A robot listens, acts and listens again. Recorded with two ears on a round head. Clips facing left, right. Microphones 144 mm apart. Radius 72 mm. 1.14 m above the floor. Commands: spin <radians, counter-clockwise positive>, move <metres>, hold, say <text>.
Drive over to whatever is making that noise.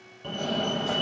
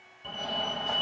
spin 1.05
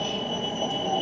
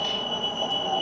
spin 0.26
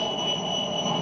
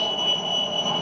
move 1.0
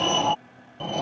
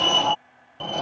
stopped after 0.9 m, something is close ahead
say I am next to the fire alarm.